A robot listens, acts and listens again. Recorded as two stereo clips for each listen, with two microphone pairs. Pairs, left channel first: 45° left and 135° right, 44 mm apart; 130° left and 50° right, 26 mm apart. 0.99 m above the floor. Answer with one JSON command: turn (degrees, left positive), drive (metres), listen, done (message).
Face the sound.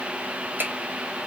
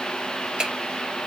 {"turn": -95}
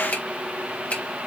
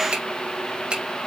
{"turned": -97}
{"done": "Facing the finger snap, 2 to 4 m away."}